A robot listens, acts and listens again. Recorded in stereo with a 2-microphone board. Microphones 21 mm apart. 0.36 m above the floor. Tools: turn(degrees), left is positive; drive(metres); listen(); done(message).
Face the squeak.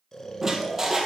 turn(degrees=-25)
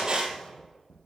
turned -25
turn(degrees=-130)
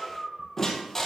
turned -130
turn(degrees=20)
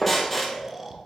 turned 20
turn(degrees=10)
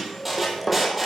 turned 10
done("Facing the squeak.")